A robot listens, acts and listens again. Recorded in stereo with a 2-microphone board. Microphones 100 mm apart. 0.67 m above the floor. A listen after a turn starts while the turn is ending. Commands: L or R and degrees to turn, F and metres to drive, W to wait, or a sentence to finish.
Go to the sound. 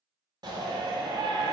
R50
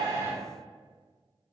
W
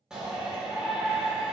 R10
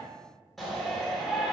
F1.0
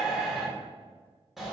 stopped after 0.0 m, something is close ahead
Blocked. The shout is further on, straight ahead.